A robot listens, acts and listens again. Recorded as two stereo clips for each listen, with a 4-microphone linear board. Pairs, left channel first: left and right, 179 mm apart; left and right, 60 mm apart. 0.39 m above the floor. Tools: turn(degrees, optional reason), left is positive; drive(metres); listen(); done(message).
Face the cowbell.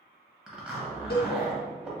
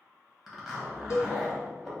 turn(degrees=60, reason="The cowbell: about 60° left or 120° left.")
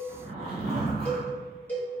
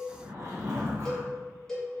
turn(degrees=10, reason="So it is at 10° left.")
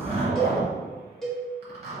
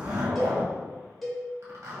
done("Facing the cowbell.")